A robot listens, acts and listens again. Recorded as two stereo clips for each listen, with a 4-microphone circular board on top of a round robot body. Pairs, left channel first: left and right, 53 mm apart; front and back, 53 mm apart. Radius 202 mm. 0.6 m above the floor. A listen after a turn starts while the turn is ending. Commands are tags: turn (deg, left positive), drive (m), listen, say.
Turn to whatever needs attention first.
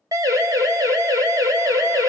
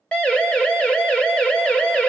<turn deg="-75"/>
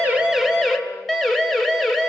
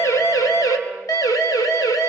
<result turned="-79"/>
<say>Found it: a siren, straight ahead, 2 to 4 m away.</say>